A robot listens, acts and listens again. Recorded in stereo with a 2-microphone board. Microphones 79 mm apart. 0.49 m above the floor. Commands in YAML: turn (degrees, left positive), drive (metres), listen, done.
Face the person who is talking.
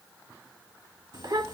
turn: -65
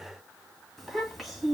done: "Found it: a child speaking, straight ahead."